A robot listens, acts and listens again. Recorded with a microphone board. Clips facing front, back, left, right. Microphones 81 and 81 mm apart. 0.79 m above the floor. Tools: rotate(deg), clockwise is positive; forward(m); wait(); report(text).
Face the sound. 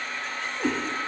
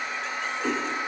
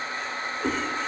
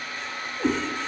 rotate(55)
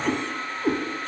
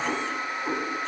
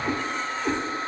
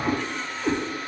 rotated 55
report("Found it: a cat meowing, straight ahead.")